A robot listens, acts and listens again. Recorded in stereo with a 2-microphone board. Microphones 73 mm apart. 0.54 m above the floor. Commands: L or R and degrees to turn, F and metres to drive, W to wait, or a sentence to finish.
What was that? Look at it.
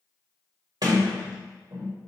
R65
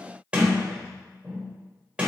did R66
R15
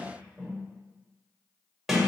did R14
Facing the sliding door, 2 to 4 m away.